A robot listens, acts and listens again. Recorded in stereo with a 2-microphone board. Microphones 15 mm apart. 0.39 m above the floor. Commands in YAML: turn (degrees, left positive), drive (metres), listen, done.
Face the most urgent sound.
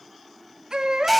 turn: -50
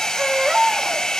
turn: -75
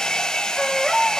turn: -10
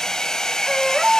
done: "Facing the baby crying."